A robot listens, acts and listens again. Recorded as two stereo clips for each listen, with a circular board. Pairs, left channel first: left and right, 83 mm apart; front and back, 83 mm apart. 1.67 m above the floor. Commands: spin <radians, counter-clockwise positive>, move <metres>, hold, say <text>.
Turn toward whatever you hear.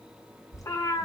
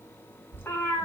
spin 1.05
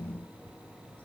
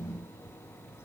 hold
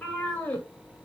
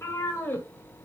spin 0.79
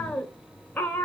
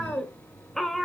spin 1.66
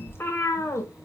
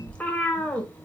spin 1.22
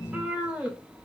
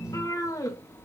spin -0.35
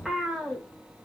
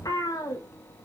say Found it: a cat meowing, straight ahead.